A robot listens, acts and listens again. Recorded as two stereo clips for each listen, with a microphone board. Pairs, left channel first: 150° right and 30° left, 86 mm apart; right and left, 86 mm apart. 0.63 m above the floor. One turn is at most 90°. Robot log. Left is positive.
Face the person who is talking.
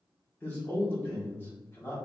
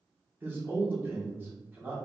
note: The man speaking: 150° left.
cmd yaw +90
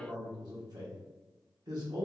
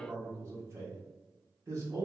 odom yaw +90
note: The man speaking is now 45° left.
cmd yaw +45
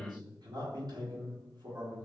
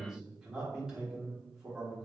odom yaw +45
note: The man speaking is now 10° left.
cmd yaw +10
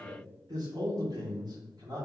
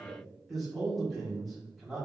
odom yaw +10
end: Facing the man speaking.